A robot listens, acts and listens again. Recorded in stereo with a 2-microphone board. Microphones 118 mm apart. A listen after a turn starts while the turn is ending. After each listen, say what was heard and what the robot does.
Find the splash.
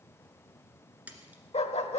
Turn 30° right.
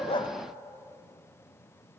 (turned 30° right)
Keep listening.
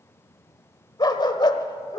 I heard a splash, but can't make it out now. It was about 15° left or 135° right.